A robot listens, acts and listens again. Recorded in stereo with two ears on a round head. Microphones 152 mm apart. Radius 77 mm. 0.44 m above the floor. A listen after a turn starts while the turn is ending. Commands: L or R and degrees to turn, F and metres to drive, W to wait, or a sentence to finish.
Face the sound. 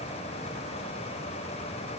W
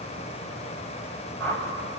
L30
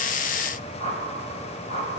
L135
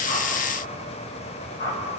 L25
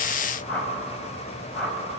Facing the whoosh.